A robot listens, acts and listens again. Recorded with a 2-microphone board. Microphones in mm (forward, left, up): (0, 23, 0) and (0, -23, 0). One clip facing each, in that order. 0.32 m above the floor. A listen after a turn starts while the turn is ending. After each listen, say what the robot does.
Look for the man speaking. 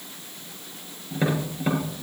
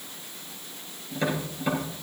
Keep listening.
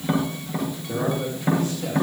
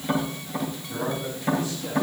Turn 55° left.
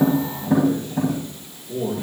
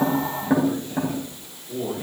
Turn 10° right.
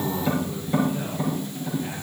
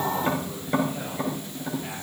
Found it: a man speaking, straight ahead.